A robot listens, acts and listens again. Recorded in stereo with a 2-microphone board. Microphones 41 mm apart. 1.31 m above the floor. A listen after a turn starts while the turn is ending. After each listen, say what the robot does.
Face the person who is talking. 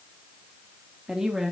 Turn 30° right.
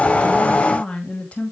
Turn 35° left.
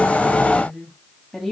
Turn 10° left.
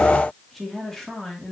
Turn 10° left.
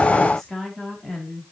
Turn 10° left.
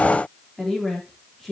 Found it: a woman speaking, straight ahead, 2 to 4 m away.